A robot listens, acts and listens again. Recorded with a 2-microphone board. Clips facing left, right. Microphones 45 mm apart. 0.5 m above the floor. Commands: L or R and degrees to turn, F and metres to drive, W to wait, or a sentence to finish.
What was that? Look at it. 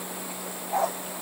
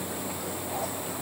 L55
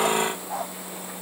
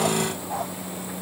Found it: a dog barking, straight ahead.